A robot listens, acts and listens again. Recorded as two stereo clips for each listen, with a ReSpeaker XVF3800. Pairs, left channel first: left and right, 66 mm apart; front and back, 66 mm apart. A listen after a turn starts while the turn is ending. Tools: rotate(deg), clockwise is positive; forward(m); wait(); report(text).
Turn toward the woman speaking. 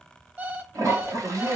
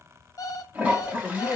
rotate(80)
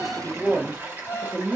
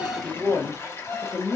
report("Facing the woman speaking, 1 to 2 m away.")